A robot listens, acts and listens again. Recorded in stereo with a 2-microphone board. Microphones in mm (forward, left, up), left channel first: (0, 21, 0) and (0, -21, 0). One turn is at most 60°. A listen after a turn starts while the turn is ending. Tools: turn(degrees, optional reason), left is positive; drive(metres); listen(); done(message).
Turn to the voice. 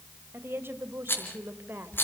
turn(degrees=-60, reason="The woman speaking: about 65° right or 115° right.")
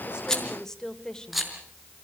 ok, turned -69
turn(degrees=15, reason="So it is at 15° left.")
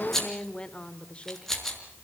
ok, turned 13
turn(degrees=30, reason="The woman speaking is now 30° left.")
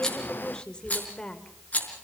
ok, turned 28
turn(degrees=25, reason="The woman speaking is now 25° left.")
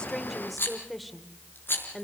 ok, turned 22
done("Found it: a woman speaking, straight ahead, 2 to 4 m away.")